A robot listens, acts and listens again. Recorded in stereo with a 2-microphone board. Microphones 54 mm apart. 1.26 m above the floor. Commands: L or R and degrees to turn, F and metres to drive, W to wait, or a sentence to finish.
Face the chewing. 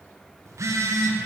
W
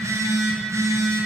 W
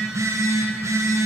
I can't make out chewing, only a phone buzzing.